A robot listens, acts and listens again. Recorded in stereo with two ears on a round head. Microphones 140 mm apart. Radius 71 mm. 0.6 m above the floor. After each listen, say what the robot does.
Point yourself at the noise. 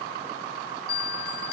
Turn 65° left.
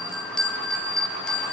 Facing the bell, 1 to 2 m away.